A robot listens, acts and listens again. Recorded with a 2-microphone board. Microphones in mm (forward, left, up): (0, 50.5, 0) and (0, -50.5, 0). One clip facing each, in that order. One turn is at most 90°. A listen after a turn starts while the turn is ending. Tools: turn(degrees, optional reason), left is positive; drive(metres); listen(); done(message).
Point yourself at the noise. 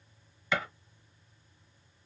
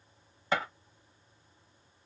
turn(degrees=-45, reason="The gunshot: about 45° right or 135° right.")
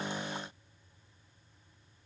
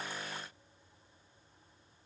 listen()
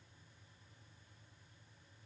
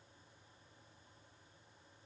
done("I heard a gunshot, but can't make it out now. It was about straight ahead or 90° right.")